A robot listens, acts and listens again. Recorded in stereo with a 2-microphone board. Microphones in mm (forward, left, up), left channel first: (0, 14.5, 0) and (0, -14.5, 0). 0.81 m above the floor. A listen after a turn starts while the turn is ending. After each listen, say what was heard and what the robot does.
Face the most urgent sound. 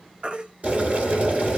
The baby crying: about 45° right or 135° right. Turn 45° right.
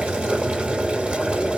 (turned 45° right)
Keep listening.
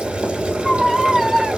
Facing the baby crying.